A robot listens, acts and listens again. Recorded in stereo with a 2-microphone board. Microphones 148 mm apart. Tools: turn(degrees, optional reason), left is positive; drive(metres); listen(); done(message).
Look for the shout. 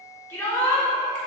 turn(degrees=15, reason="The shout: about 15° left or 165° left.")
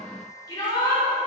turn(degrees=150, reason="So it is at 150° left.")
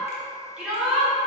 turn(degrees=-10, reason="The shout is now 10° right.")
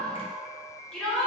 done("Found it: a shout, straight ahead, 1 to 2 m away.")